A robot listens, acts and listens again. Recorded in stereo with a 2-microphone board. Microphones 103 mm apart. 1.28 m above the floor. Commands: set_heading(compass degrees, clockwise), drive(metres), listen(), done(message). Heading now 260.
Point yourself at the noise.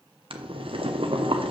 set_heading(320)
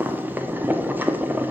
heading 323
set_heading(343)
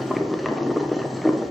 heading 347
done("Facing the boiling.")